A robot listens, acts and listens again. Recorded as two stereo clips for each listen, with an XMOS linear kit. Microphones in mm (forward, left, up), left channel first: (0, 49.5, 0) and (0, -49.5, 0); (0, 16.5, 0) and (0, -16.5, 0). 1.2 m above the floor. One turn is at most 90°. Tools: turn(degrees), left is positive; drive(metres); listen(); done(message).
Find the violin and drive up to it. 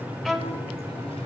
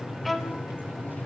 turn(degrees=30)
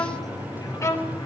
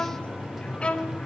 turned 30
turn(degrees=90)
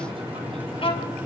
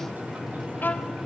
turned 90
turn(degrees=55)
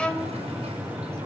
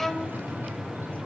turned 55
drive(metres=1.0)
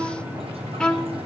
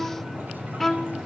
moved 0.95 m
turn(degrees=10)
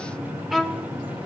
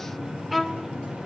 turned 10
drive(metres=1.0)
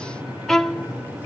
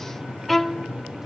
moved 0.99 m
drive(metres=1.0)
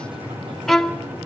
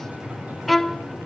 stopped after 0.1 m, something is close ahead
done("I am next to the violin.")